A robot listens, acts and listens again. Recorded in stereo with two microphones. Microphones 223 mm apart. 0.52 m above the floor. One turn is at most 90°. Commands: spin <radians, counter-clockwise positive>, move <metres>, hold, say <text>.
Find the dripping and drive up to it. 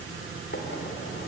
hold
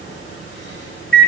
hold
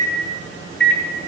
say I can't make out dripping, only a microwave.